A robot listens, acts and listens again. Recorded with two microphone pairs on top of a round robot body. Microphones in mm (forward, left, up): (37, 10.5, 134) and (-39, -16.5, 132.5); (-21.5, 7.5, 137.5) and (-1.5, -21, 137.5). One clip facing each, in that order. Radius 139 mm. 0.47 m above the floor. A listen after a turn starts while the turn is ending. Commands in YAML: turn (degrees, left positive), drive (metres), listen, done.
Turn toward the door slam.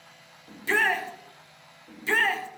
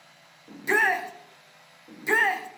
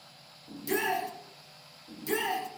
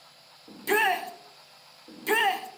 listen: true
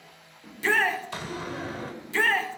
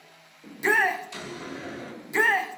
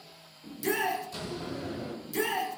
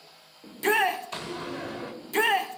turn: -25
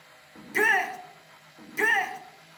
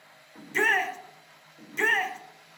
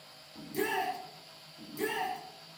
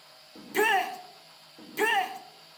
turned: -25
done: "I heard a door slam from this way, but can't make it out now."